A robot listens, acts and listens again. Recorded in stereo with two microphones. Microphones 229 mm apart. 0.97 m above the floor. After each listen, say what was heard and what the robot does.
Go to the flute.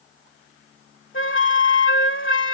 The flute: about 60° left or 120° left. Turn 60° left.
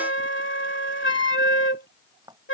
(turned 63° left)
So it is at 60° left. Turn 60° left.
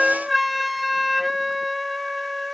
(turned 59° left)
Drive 1.0 m forward.
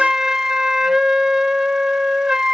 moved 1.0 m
Drive 1.0 m forward.
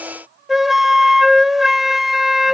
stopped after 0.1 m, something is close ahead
I am next to the flute.